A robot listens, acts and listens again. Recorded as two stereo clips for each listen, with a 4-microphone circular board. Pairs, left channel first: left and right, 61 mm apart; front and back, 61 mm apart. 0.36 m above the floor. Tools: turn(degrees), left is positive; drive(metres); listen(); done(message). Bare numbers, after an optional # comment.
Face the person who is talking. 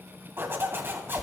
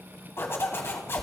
listen()
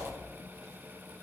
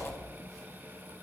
listen()
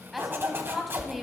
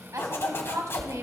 # The woman speaking: straight behind.
turn(180)
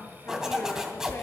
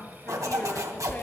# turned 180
listen()
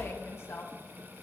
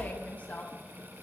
# The woman speaking is now 60° left.
turn(60)
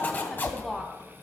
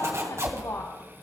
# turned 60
listen()
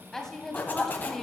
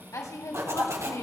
# The woman speaking is now 10° left.
turn(10)
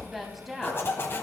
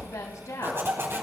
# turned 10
done("Facing the woman speaking, 2 to 4 m away.")